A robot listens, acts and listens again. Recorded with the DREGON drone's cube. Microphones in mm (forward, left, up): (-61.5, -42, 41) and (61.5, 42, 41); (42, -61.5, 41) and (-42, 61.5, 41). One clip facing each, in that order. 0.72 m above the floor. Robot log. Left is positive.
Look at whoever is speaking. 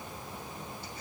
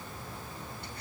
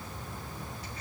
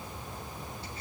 cmd idle
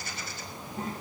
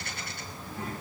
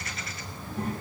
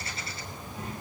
note: The child speaking: 90° right.
cmd yaw -90
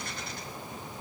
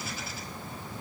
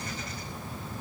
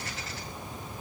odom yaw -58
note: Nothing new. It was at 35° right.
cmd yaw -35
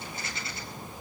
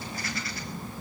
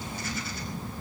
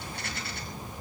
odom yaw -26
cmd idle
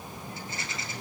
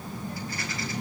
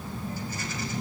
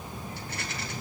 note: The child speaking is now 10° right.
cmd yaw -10
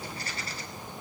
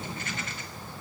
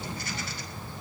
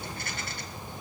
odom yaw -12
cmd idle
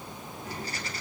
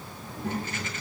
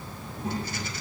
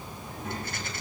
end: Facing the child speaking.